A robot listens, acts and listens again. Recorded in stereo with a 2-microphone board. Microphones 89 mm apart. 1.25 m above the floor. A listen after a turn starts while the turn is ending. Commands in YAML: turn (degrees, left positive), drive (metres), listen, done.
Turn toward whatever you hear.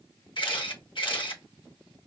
turn: 65
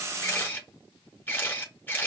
turn: 25
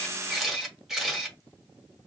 done: "Found it: a camera shutter, straight ahead, 1 to 2 m away."